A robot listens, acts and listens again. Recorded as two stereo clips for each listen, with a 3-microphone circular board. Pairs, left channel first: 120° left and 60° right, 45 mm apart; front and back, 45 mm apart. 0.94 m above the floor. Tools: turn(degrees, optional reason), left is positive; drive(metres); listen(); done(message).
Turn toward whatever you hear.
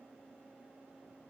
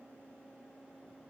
listen()
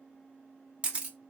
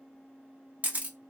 turn(degrees=-125, reason="The camera shutter: 125° right.")
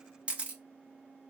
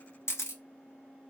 done("Facing the camera shutter, 1 to 2 m away.")